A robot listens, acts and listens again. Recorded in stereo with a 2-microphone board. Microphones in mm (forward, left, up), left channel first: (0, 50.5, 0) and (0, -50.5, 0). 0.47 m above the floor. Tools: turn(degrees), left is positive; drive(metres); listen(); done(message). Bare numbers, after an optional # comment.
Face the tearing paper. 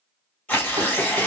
turn(30)
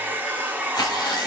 # So it is at 135° left.
turn(135)
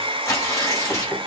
# The tearing paper is now 30° left.
turn(30)
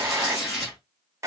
done("Found it: tearing paper, straight ahead, 2 to 4 m away.")